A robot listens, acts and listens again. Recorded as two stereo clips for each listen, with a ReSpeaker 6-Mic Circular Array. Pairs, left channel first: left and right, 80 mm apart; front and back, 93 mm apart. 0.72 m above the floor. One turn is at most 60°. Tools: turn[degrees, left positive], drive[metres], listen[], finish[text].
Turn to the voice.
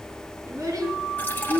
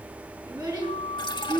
Thought: The child speaking: 130° right.
Action: turn[-60]
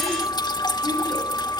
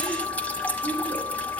Thought: Nothing new. It was at 70° right.
Action: turn[-60]
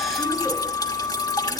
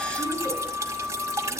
Thought: Nothing new. It was at 10° right.
Action: turn[-10]
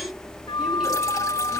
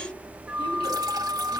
Action: finish[Facing where the child speaking came from. I can't hear it now.]